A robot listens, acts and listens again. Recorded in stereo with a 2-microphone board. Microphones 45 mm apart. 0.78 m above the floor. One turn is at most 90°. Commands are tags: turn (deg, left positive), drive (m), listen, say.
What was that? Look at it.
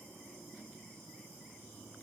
<listen/>
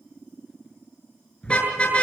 <turn deg="25"/>
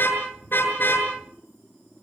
<turn deg="90"/>
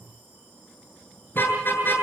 <turn deg="50"/>
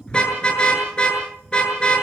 <turn deg="20"/>
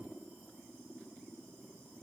<listen/>
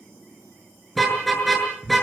<say>Found it: a car horn, straight ahead, over 4 m away.</say>